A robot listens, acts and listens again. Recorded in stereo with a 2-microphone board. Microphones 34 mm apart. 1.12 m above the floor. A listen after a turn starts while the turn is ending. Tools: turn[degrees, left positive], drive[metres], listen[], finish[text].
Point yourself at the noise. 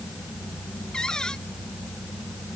Thought: The cupboard door: about 20° left or 160° left.
Action: turn[20]
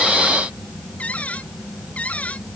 Thought: So it is at 140° left.
Action: turn[140]
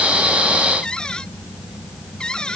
Thought: The cupboard door is now 25° left.
Action: turn[25]
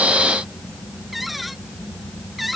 Action: finish[Found it: a cupboard door, straight ahead.]